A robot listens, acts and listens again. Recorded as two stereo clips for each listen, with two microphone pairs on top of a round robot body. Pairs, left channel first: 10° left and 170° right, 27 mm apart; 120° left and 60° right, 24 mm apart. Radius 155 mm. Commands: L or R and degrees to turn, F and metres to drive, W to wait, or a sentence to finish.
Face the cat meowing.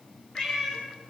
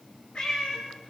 L70
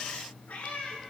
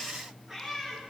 L15
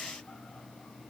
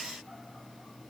W
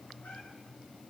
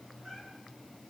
W
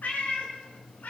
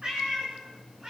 Facing the cat meowing.